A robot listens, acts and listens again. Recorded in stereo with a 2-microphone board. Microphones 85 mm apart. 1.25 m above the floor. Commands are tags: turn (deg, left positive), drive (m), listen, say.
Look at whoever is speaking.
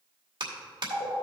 <listen/>
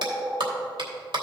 <listen/>
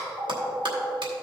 <say>I can't make out anyone speaking, only a phone ringing and a clap.</say>